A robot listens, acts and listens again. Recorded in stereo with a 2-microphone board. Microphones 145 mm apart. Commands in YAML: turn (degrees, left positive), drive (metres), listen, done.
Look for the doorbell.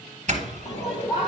turn: -55
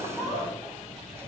turn: -20
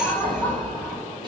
listen: true
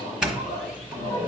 done: "Facing the doorbell, 1 to 2 m away."